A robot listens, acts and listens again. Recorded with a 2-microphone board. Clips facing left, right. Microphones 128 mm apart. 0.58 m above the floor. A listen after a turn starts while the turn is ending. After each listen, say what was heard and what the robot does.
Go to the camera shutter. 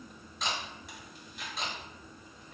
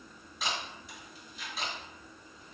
Turn 30° right.
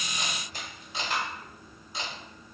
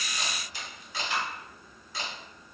So it is at 25° left. Turn 25° left.
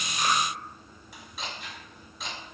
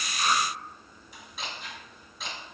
Drive 1.0 m forward.
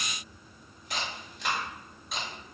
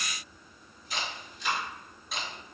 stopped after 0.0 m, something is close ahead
Something is in my way. I am facing the camera shutter but have not reached it.